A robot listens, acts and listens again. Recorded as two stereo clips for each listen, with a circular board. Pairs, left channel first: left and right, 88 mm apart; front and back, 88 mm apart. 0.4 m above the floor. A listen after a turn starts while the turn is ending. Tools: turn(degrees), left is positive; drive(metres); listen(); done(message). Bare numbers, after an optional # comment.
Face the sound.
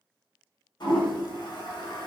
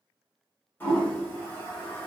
# The toilet flushing: 65° left.
turn(65)
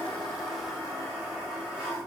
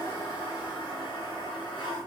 done("Facing the toilet flushing.")